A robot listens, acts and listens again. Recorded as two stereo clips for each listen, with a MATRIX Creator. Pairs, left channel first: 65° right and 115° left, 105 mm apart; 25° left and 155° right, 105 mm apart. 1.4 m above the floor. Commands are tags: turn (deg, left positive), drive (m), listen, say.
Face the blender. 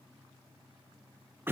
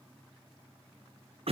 <listen/>
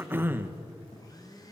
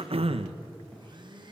<turn deg="-120"/>
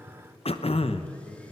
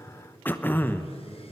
<listen/>
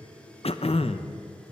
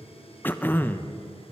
<listen/>
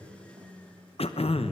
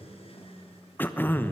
<turn deg="10"/>
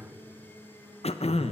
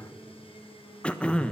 <say>Found it: a blender, straight ahead, 2 to 4 m away.</say>